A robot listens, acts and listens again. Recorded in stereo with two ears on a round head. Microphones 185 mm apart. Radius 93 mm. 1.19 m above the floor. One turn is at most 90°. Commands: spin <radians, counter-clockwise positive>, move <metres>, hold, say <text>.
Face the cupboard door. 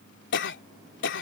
hold
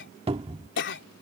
spin -0.52
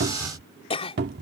spin -1.57
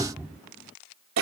spin -0.26
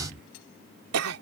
spin 0.17
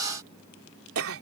hold
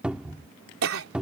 say Facing the cupboard door.